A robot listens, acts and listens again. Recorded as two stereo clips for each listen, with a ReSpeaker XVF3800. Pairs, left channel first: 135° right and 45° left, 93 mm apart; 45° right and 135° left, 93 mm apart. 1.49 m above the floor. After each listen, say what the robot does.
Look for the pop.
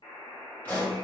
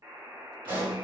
Turn 155° left.
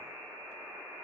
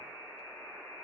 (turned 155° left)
Facing where the pop came from. I can't hear it now.